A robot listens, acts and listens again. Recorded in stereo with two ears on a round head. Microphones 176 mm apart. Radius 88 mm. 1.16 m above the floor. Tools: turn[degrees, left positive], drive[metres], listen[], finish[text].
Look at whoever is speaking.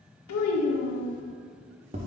Action: turn[90]
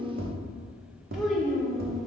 Action: finish[Found it: a child speaking, straight ahead.]